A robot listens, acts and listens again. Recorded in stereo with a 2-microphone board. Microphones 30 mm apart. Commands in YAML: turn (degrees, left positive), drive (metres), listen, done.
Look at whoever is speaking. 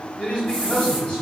turn: 50
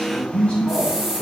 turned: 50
listen: true
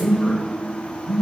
listen: true
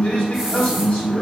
turn: 70
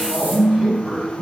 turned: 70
turn: -15
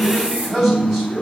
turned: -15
done: "Found it: a man speaking, straight ahead, 1 to 2 m away."